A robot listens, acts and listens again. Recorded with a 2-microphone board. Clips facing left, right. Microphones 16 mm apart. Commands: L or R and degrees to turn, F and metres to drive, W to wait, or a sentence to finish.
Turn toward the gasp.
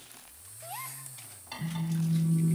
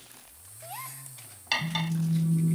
L30
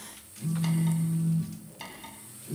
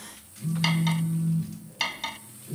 W
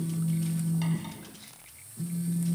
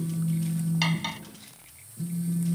I heard a gasp, but can't make it out now. It was about 30° right or 150° left.